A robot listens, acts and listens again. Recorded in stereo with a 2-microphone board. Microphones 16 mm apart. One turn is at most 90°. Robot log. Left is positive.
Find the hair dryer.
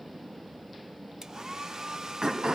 note: The hair dryer: about 40° right or 140° right.
cmd yaw -40
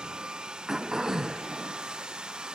note: So it is at 100° right.
cmd yaw -90
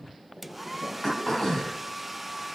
end: Found it: a hair dryer, straight ahead, 1 to 2 m away.